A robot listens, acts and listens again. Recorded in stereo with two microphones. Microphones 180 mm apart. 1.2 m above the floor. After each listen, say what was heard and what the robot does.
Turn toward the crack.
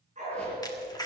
The crack: about 20° left or 160° left. Turn 20° left.
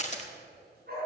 So it is at 140° left. Turn 140° left.
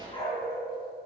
I heard a crack from this way, but can't make it out now.